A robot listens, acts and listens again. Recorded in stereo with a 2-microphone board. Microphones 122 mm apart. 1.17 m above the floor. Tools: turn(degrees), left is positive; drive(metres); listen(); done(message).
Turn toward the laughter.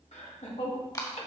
turn(degrees=75)
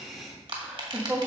turn(degrees=-10)
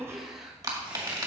done("Found it: laughter, straight ahead, 1 to 2 m away.")